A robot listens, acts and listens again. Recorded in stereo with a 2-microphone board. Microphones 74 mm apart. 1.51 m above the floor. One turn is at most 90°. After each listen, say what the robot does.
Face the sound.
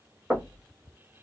Turn 30° right.
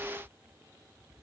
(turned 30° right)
Keep listening.
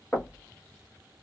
Turn 15° left.
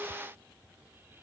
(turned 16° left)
Keep listening.
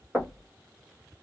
Facing the knocking.